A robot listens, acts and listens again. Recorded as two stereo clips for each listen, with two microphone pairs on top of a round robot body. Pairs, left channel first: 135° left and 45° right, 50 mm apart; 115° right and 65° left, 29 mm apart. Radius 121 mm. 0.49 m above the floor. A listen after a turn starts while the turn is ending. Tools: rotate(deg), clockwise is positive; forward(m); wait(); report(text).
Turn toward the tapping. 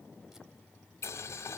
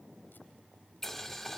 wait()
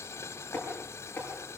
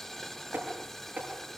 rotate(-70)
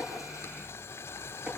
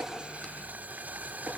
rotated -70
wait()
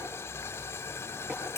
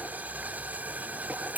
wait()
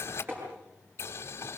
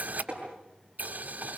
report("Facing the tapping.")